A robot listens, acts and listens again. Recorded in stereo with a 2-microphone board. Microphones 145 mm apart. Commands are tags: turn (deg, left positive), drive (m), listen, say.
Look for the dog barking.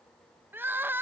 <listen/>
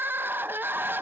<listen/>
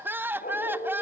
<turn deg="75"/>
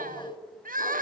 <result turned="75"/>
<turn deg="20"/>
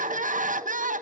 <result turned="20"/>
<listen/>
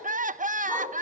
<turn deg="-10"/>
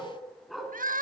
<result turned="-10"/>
<say>Found it: a dog barking, straight ahead.</say>